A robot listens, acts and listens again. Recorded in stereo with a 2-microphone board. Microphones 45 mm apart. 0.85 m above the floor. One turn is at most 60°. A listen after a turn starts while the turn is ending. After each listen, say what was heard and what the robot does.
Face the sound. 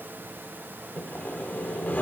The sawing: about 40° left or 140° left. Turn 40° left.
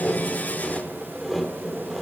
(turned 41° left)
Found it: sawing, straight ahead.